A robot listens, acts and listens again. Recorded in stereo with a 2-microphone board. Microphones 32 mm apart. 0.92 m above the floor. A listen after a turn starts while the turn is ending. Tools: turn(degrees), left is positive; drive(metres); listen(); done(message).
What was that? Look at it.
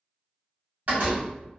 turn(degrees=-50)
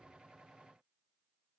listen()
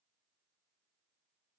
done("I heard a door slam, but can't make it out now. It was about straight ahead or 80° right.")